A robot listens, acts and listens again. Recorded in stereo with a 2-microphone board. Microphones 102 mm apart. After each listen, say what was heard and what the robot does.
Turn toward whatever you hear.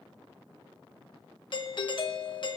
The doorbell: about 55° left or 125° left. Turn 55° left.
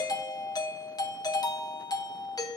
So it is at 55° left. Turn 55° left.
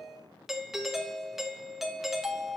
Facing the doorbell.